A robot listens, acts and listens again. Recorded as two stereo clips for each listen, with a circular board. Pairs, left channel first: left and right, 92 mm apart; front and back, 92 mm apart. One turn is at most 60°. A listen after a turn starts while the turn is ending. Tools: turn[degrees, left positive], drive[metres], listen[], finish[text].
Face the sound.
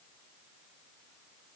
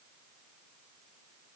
Action: listen[]
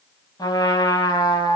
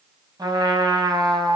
Thought: The trumpet: 135° left.
Action: turn[60]
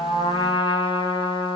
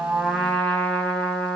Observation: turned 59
Thought: The trumpet is now 75° left.
Action: turn[60]
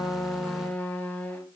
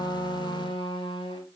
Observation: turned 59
Thought: The trumpet is now 15° left.
Action: turn[15]
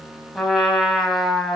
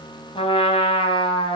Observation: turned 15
Action: finish[Found it: a trumpet, straight ahead, over 4 m away.]